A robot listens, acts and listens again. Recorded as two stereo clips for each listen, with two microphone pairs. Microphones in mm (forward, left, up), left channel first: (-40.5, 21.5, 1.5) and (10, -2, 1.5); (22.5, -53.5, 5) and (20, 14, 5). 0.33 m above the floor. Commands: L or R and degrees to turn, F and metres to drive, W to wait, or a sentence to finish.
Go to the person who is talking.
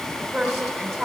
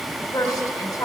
R115
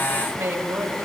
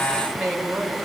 F1.0
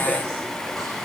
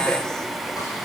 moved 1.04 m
W
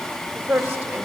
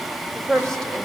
F1.0
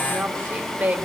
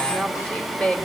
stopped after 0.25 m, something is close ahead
R15
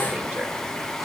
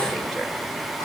W
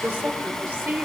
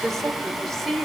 Arrived at the woman speaking, straight ahead.